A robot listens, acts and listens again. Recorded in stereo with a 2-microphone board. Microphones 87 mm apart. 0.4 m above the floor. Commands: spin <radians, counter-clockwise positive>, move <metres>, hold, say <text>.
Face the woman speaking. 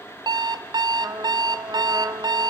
hold
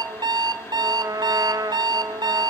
hold
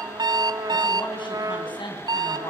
spin 1.22
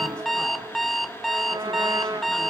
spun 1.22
hold
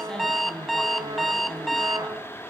spin 0.17
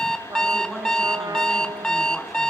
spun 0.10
say Facing the woman speaking, over 4 m away.